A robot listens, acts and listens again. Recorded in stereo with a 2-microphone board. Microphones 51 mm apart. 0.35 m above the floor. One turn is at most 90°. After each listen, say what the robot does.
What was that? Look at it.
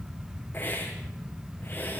Turn 40° left.
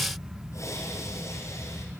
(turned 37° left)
Keep listening.
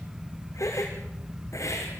Turn 90° left.
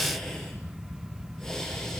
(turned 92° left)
Turn 10° left.
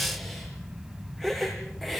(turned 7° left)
Found it: a hiss, straight ahead.